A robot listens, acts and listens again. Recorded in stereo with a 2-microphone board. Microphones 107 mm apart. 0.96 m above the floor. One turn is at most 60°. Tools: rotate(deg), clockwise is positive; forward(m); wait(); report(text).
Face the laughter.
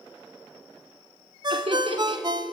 rotate(60)
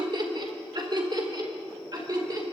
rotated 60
rotate(40)
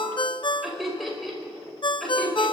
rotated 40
report("Facing the laughter.")